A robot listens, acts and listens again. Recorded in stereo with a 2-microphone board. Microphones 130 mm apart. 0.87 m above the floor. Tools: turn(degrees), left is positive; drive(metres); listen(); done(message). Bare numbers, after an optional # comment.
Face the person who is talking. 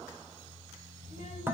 # The child speaking: about 65° left or 115° left.
turn(65)
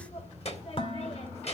# So it is at 55° left.
turn(55)
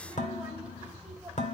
# The child speaking is now 15° right.
turn(-15)
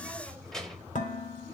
done("Facing the child speaking, 2 to 4 m away.")